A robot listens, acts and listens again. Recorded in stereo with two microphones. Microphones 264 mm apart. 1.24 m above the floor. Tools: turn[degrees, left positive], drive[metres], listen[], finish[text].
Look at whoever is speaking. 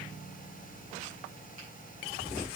Action: listen[]
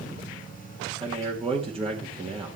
Thought: The man speaking: about 20° right or 160° right.
Action: turn[-20]
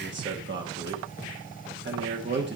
Thought: So it is at 135° right.
Action: turn[-135]
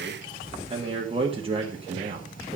Thought: The man speaking is now 20° right.
Action: turn[-20]
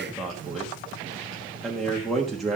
Action: finish[Facing the man speaking, 1 to 2 m away.]